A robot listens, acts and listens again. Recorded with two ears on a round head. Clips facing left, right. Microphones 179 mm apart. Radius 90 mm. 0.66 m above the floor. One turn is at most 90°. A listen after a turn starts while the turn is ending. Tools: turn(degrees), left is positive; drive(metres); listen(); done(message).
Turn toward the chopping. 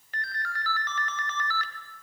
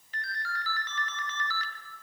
listen()
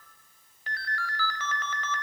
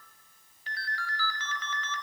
listen()
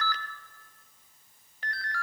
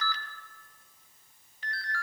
done("I can't make out chopping to turn to.")